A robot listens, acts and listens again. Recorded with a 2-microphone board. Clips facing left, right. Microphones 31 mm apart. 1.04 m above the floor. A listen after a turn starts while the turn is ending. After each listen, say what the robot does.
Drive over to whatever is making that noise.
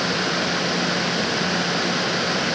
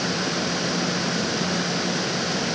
Keep listening.
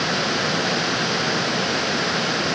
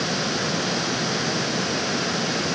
Keep listening.
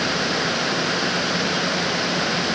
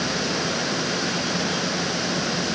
I can't make out anything to turn to.